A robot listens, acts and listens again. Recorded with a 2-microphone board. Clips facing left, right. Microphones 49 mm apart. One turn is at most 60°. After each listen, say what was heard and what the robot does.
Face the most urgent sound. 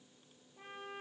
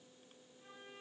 Keep listening.
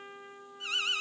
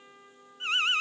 The alarm: about 40° right or 140° right. Turn 40° right.
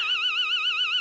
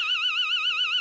Facing the alarm, under 1 m away.